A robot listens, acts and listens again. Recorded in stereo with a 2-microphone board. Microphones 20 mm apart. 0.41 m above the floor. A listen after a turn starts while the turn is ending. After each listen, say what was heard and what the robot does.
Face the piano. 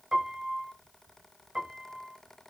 The piano: about 45° right or 135° right. Turn 45° right.
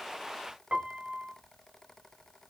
So it is at 85° right. Turn 85° right.
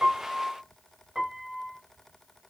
The piano is now 30° right. Turn 30° right.
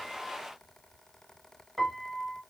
The piano is now 10° left. Turn 10° left.
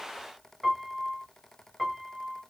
Found it: a piano, straight ahead, under 1 m away.